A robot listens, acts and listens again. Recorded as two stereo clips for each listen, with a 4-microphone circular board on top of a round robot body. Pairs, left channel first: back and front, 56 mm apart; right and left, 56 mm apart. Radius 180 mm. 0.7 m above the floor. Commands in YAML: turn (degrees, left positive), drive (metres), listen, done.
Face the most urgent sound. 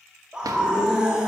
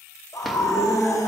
turn: -75
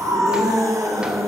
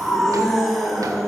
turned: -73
done: "Facing the scream."